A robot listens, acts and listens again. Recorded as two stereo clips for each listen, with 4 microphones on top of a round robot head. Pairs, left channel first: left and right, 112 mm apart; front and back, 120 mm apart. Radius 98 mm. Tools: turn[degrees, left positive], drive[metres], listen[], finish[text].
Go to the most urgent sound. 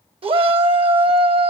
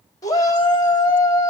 Thought: The shout: 60° right.
Action: turn[-60]
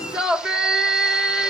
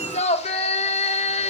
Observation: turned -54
Action: drive[1.0]
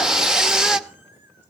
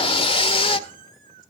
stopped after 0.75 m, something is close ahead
Action: finish[Arrived at the shout, straight ahead.]